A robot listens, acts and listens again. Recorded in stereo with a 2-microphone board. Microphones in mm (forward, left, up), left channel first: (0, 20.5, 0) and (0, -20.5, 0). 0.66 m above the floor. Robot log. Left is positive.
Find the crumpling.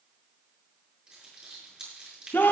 note: The crumpling: about 25° right or 155° right.
cmd yaw -25
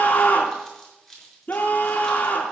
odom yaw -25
end: Facing the crumpling.